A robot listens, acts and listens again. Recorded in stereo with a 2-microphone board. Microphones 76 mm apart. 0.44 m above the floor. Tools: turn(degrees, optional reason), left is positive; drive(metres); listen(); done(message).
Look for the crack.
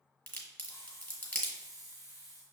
turn(degrees=30, reason="The crack: about 30° left or 150° left.")
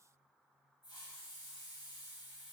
listen()
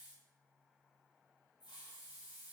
done("I heard a crack, but can't make it out now. It was about straight ahead or 120° left.")